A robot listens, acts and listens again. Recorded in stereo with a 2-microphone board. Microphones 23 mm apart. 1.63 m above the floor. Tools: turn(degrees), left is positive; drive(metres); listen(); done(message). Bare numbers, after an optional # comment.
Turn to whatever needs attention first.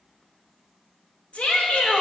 # The shout: about 70° left or 110° left.
turn(70)
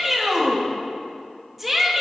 done("Found it: a shout, straight ahead, 2 to 4 m away.")